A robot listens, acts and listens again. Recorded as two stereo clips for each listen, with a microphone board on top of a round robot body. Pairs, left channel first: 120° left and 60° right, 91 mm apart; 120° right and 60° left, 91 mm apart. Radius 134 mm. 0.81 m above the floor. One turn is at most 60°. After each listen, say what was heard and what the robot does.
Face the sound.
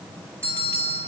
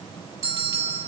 Facing the bell.